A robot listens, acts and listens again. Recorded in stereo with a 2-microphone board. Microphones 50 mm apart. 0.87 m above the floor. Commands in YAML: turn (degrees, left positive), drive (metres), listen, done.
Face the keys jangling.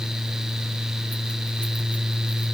listen: true
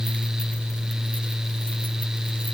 listen: true
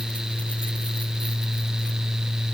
done: "I can't make out keys jangling to turn to."